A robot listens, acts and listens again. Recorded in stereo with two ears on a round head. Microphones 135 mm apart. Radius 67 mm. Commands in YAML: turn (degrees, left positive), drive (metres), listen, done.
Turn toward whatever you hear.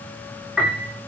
turn: -30
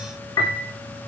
turn: 25
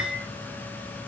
done: "Facing the piano, over 4 m away."